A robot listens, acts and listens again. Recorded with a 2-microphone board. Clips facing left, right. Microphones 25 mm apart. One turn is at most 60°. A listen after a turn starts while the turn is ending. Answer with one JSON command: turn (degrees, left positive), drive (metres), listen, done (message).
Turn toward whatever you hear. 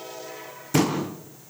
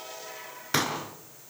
{"turn": -50}
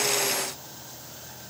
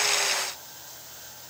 {"listen": true}
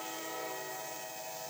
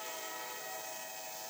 {"done": "I heard a pop, but can't make it out now. It was about straight ahead or 80° right."}